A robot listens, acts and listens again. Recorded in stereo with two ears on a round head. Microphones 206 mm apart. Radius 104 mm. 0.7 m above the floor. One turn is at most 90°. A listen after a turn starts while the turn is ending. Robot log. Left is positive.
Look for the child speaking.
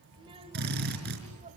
note: The child speaking: about 35° right or 145° right.
cmd yaw -35
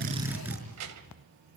note: So it is at 100° right.
cmd yaw -90
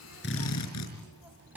end: Facing the child speaking.